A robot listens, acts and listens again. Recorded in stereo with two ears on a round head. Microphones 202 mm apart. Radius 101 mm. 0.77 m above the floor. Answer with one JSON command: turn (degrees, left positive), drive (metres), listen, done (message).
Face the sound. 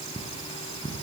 {"turn": 30}
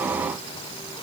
{"listen": true}
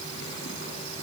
{"listen": true}
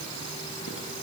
{"done": "I heard cutlery clinking, but can't make it out now. It was about straight ahead or 120° left."}